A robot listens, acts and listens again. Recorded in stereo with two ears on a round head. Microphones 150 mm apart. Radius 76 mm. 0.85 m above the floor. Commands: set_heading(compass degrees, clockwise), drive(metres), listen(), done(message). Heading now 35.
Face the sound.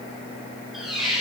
set_heading(5)
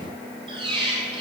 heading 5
set_heading(35)
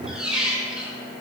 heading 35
done("Facing the squeak, 1 to 2 m away.")